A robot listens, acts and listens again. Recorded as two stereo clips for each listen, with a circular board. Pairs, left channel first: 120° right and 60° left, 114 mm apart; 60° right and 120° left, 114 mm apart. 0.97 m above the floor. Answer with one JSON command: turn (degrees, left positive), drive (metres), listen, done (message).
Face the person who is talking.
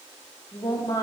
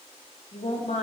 {"turn": -65}
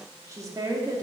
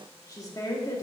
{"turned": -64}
{"done": "Facing the woman speaking, 1 to 2 m away."}